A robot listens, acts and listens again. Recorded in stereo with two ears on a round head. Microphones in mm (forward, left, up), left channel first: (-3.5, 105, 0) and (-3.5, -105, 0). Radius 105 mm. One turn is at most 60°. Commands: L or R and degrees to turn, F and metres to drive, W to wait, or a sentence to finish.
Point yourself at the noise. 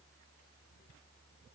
W
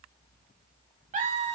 R30
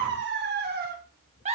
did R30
R30
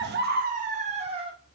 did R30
R25
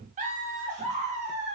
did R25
R35
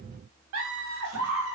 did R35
R60
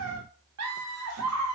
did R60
R60
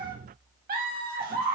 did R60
R40
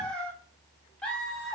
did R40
Found it: laughter, straight ahead.